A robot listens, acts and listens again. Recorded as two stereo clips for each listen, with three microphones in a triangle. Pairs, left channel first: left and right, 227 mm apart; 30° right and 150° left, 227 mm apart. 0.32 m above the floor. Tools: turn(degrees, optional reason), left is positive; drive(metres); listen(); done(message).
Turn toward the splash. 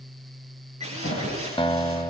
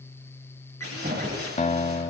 turn(degrees=110, reason="The splash: 110° left.")
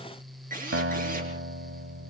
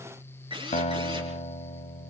done("Facing where the splash came from. I can't hear it now.")